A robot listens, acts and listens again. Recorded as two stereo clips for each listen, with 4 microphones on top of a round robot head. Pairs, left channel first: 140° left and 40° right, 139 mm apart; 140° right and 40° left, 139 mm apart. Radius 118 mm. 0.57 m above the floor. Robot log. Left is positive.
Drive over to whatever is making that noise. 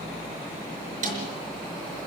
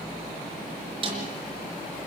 note: The snare drum: 15° right.
cmd yaw -15
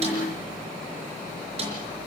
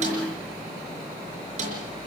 cmd idle
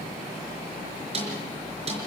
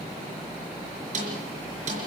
cmd fwd 1.0
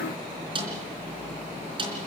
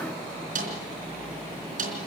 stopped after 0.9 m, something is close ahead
note: The snare drum is now 15° left.
cmd yaw +15
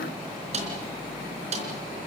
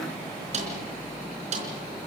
end: Something is in my way. I am facing the snare drum but have not reached it.